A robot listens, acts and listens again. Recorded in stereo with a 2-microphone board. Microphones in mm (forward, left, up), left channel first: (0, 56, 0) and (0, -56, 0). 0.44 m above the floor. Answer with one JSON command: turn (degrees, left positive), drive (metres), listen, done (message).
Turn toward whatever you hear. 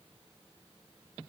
{"listen": true}
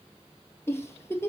{"turn": 25}
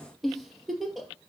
{"done": "Facing the giggle."}